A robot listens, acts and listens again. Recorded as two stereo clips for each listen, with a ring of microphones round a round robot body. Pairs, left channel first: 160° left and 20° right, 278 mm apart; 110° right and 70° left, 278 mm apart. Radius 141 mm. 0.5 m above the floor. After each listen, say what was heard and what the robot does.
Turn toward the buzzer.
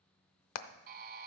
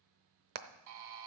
The buzzer: 35° left. Turn 35° left.
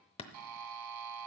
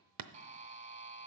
Facing the buzzer.